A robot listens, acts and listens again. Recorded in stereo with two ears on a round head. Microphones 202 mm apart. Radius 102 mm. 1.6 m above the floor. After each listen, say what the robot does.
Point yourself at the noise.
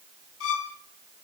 Turn 65° left.
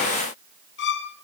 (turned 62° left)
Turn 50° left.
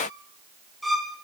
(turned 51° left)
Found it: a violin, straight ahead.